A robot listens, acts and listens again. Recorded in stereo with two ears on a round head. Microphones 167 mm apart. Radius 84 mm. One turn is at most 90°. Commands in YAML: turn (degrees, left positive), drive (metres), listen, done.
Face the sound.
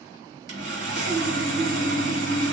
turn: -60
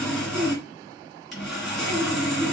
done: "Facing the sawing."